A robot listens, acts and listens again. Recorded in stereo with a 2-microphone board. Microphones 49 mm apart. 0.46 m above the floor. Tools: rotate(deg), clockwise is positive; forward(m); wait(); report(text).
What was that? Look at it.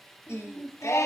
rotate(-90)
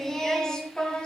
rotate(-20)
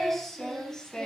rotate(-15)
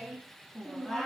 rotate(-10)
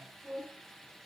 rotate(-10)
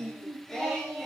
rotate(-10)
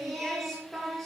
report("Found it: singing, straight ahead, 2 to 4 m away.")